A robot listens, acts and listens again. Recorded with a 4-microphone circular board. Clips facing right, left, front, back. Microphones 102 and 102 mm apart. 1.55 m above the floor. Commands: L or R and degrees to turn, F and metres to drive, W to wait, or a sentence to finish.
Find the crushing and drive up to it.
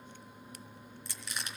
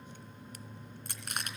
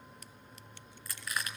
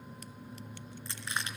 L115
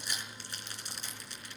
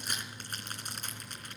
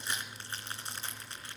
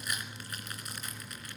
L55
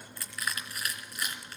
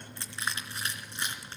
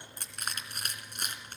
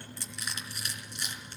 L30
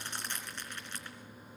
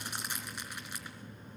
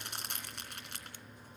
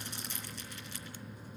L10
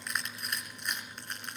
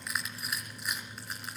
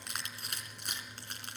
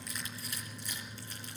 F1.0
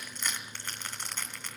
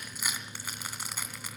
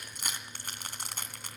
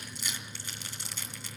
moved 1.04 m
L10
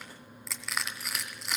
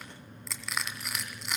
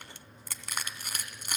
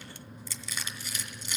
F1.0
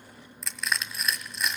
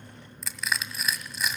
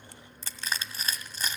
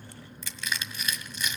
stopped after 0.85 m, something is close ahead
Arrived at the crushing, straight ahead.